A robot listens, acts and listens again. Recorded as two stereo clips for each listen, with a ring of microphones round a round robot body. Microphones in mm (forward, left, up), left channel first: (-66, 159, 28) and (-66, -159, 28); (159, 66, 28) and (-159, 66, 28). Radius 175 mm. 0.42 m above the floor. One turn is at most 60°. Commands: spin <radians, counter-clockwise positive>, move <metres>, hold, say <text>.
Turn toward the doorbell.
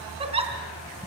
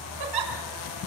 hold
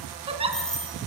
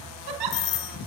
say Facing the doorbell, 2 to 4 m away.